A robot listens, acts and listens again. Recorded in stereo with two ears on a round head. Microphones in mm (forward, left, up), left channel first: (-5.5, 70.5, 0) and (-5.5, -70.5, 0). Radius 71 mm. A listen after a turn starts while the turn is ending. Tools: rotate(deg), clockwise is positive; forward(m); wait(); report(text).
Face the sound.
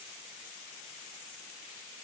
wait()
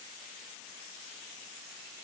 wait()
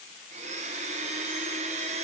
rotate(45)
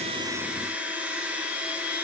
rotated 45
rotate(10)
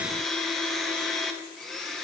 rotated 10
report("Facing the blender.")